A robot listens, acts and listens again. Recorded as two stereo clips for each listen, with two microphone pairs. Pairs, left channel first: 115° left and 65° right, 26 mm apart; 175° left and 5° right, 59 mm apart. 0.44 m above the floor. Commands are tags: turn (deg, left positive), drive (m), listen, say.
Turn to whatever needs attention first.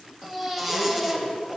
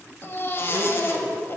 <turn deg="-140"/>
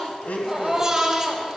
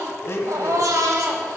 <say>Facing the baby crying, under 1 m away.</say>